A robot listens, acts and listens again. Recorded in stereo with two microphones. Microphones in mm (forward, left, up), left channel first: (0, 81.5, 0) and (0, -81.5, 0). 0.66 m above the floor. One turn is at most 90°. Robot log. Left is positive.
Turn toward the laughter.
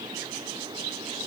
cmd idle
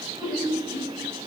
note: The laughter: about 25° left or 155° left.
cmd yaw +25
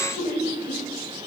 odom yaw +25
note: So it is at 130° left.
cmd yaw +90
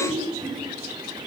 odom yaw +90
note: The laughter is now 40° left.
cmd yaw +40
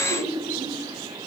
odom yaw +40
end: Found it: laughter, straight ahead, 2 to 4 m away.